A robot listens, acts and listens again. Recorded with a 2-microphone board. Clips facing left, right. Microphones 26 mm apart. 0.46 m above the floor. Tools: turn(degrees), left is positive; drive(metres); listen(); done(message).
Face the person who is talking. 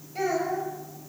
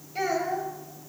turn(degrees=-30)
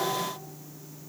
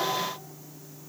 listen()
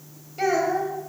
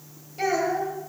turn(degrees=20)
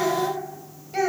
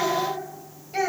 done("Found it: a child speaking, straight ahead.")